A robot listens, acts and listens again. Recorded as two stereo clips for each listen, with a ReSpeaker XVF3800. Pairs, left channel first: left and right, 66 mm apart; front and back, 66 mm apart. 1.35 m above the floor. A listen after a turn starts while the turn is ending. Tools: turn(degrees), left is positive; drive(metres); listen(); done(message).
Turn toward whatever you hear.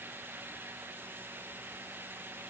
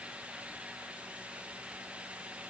listen()
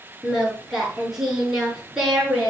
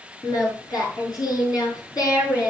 done("Found it: singing, straight ahead.")